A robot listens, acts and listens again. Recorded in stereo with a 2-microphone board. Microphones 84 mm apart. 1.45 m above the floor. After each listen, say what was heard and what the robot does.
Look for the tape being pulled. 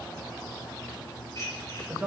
Keep listening.
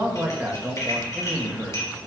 Keep listening.
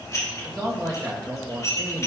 I can't make out tape being pulled to turn to.